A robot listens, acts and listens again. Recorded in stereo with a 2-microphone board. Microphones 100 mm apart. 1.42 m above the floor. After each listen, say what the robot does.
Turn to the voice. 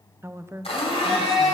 Turn 25° right.
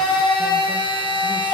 Keep listening.
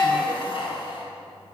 Keep listening.
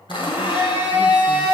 I heard a woman speaking, but can't make it out now. It was about straight ahead or 130° right.